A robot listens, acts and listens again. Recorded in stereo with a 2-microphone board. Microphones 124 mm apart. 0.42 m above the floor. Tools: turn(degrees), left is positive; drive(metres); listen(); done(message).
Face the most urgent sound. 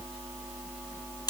listen()
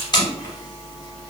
listen()
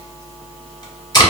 done("I can't make out anything urgent, only tape being pulled.")